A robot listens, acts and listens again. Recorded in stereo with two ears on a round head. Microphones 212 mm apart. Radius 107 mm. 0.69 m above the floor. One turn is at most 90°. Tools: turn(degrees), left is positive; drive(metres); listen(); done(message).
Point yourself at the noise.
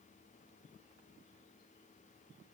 listen()
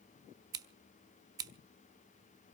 turn(degrees=-15)
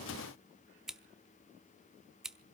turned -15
done("Found it: scissors, straight ahead, under 1 m away.")